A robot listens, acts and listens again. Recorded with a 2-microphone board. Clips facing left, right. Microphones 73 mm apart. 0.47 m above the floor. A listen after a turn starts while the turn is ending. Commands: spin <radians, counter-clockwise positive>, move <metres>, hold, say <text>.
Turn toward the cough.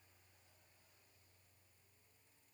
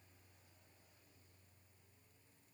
hold
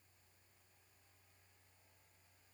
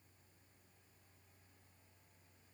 hold
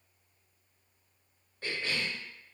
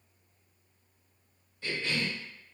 spin 0.96
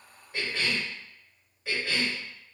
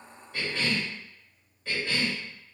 spin 0.17
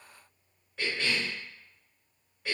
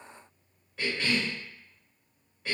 say Facing the cough.